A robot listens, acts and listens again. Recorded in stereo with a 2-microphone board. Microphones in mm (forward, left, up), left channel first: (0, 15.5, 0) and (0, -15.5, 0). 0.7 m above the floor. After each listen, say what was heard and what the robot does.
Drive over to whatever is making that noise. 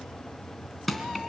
Turn 30° left.
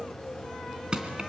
So it is at 30° right. Turn 30° right.
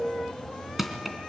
The crushing is now 10° right. Turn 10° right.
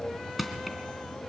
Drive 1.0 m forward.
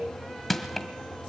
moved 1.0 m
Drive 1.0 m forward.
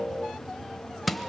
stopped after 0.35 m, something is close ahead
Arrived at the crushing, straight ahead.